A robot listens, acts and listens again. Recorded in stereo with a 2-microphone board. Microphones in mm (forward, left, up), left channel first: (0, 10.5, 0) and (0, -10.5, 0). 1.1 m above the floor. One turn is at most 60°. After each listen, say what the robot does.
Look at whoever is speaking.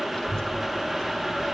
Turn 30° left.
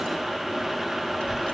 Turn 60° left.
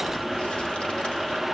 Turn 60° left.
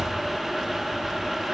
Facing the child speaking.